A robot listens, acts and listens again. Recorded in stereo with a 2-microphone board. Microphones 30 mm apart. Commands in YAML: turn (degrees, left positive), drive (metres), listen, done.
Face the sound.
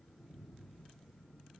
listen: true
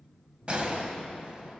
turn: -35
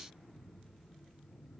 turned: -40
listen: true
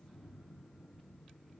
done: "I heard a gunshot, but can't make it out now. It was about 5° left or 105° right."